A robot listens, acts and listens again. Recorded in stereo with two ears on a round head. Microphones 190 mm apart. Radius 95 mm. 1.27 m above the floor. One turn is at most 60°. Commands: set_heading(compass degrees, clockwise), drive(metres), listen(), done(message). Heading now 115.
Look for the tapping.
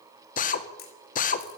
listen()
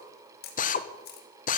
listen()
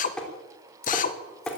set_heading(85)
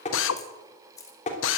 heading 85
set_heading(25)
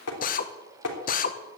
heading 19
set_heading(319)
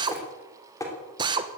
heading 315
set_heading(300)
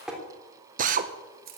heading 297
done("Facing the tapping, 2 to 4 m away.")